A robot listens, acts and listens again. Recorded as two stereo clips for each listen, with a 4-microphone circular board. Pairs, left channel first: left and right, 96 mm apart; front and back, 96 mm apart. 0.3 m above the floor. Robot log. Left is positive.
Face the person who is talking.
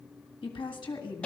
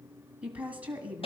note: The woman speaking: 105° left.
cmd yaw +105
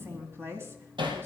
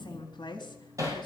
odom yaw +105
note: The woman speaking is now 30° right.
cmd yaw -30
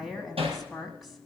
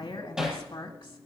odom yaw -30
end: Facing the woman speaking.